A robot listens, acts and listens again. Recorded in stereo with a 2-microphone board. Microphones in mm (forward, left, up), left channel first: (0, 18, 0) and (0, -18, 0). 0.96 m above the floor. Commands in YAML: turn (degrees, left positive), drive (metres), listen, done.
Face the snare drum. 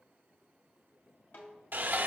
turn: 65
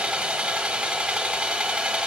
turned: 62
listen: true
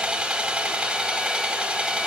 listen: true
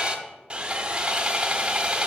done: "I heard a snare drum, but can't make it out now. It was about 5° left or 50° left."